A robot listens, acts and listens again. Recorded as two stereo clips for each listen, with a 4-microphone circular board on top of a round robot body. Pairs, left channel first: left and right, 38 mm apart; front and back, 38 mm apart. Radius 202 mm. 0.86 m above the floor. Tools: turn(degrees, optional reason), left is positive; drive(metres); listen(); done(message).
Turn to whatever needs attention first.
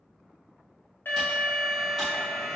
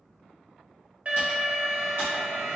turn(degrees=120, reason="The alarm: 120° left.")
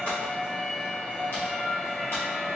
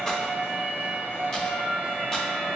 turn(degrees=10, reason="The alarm is now 10° left.")
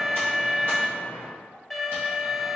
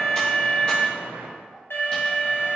done("Found it: an alarm, straight ahead, under 1 m away.")